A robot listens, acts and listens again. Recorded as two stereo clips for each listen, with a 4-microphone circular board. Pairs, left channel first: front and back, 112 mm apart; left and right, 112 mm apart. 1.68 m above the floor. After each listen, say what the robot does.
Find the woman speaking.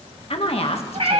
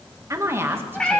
Turn 20° right.
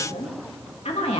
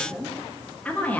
Turn 15° left.
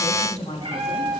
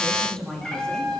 Facing the woman speaking, 2 to 4 m away.